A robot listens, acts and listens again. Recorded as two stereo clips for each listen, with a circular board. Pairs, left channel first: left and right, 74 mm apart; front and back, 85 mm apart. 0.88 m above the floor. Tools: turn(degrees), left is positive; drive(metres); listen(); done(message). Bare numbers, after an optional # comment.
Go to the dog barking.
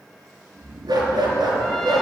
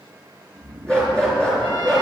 # The dog barking: 80° right.
turn(-80)
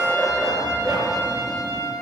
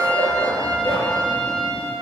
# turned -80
# The dog barking is now 15° right.
turn(-15)
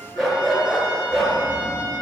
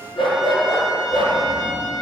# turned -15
drive(1.0)
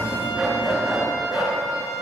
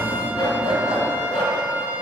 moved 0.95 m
drive(1.0)
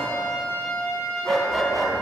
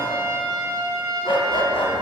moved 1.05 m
drive(1.0)
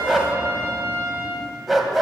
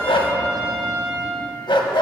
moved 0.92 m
drive(1.0)
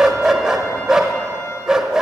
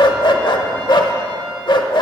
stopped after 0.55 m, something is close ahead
# The dog barking is now 10° right.
turn(-10)
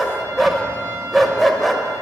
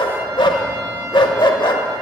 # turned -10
done("Arrived at the dog barking, straight ahead.")